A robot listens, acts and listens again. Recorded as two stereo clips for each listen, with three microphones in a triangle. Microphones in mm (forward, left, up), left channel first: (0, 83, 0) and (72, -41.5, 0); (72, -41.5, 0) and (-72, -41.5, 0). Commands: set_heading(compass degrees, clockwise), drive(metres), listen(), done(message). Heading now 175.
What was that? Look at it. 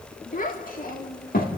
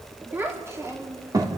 set_heading(60)
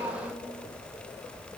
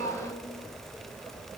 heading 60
listen()
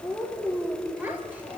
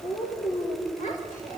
set_heading(40)
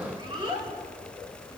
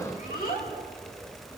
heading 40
done("Facing the child speaking.")